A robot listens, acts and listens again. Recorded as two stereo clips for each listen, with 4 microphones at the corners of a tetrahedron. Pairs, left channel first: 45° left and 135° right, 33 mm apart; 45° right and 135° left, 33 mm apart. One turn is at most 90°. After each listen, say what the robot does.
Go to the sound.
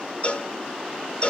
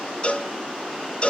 Drive 1.0 m forward.
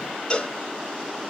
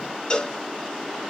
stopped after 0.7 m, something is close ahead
I am next to the cowbell.